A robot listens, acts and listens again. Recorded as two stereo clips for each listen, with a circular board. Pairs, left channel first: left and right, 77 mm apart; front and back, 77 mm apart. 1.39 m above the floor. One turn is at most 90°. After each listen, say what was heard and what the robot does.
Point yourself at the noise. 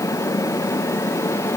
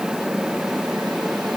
Keep listening.
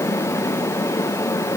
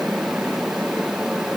Keep listening.
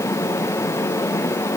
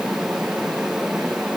I can't make out anything to turn to.